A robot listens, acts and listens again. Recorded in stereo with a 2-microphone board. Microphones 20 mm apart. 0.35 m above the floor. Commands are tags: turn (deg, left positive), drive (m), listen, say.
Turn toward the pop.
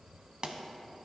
<turn deg="-45"/>
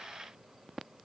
<listen/>
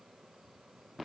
<say>I heard a pop, but can't make it out now. It was about straight ahead or 90° right.</say>